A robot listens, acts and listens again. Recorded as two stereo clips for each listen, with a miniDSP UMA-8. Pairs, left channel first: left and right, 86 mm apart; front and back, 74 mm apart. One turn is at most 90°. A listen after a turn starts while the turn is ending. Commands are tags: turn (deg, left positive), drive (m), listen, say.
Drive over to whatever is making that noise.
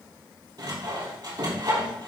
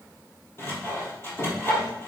<turn deg="-55"/>
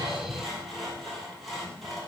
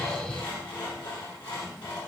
<drive m="1.0"/>
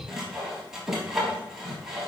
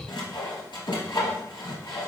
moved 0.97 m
<drive m="1.0"/>
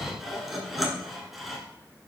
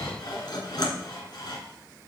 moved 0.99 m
<drive m="1.0"/>
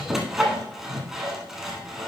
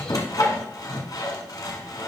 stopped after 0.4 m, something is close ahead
<say>Arrived at the sawing, straight ahead.</say>